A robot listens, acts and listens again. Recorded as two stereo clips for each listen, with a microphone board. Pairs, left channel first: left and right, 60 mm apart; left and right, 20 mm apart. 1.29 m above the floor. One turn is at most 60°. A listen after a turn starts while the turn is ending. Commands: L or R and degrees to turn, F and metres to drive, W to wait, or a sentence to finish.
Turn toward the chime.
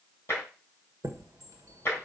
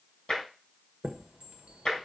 R60
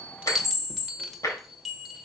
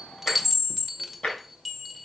Facing the chime.